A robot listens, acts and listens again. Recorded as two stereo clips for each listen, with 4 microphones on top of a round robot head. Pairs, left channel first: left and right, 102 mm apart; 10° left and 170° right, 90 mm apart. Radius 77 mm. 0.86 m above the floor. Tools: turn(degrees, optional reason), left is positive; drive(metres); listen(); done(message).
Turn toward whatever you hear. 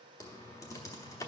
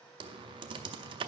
turn(degrees=155, reason="The typing on a keyboard: 155° left.")
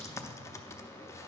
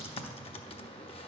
turn(degrees=25, reason="The typing on a keyboard is now 25° left.")
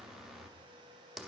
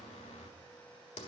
done("Facing the typing on a keyboard.")